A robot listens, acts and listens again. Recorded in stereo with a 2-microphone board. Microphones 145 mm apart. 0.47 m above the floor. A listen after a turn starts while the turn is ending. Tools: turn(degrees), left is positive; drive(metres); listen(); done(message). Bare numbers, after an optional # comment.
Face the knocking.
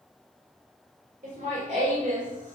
listen()
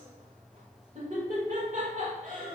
listen()
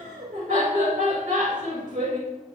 done("I can't make out knocking, only laughter.")